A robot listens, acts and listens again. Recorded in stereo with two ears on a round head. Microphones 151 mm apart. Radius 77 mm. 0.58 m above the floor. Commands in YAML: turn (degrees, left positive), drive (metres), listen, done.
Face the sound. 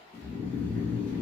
turn: 30
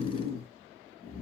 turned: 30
turn: 135
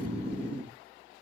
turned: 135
turn: -10
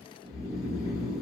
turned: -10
done: "Found it: snoring, straight ahead, 1 to 2 m away."